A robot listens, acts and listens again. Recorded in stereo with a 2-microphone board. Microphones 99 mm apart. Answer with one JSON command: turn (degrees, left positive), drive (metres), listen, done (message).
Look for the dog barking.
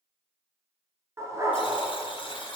{"turn": -30}
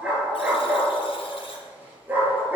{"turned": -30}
{"turn": -20}
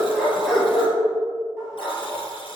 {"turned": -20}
{"done": "Facing the dog barking, 2 to 4 m away."}